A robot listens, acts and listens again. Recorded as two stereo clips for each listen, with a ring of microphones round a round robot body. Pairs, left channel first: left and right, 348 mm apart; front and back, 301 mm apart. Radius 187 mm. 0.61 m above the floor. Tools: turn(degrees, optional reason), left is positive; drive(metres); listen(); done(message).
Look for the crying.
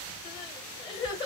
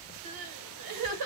turn(degrees=170, reason="The crying: 170° left.")
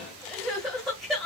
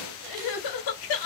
done("Found it: crying, straight ahead, under 1 m away.")